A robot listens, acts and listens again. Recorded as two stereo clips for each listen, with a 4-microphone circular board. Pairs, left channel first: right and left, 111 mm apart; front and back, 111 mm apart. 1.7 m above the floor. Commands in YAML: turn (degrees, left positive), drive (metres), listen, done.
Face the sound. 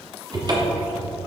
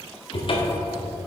turn: 40
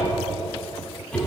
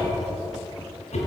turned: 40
turn: -10
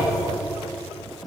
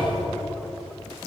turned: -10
done: "Facing the cupboard door, 1 to 2 m away."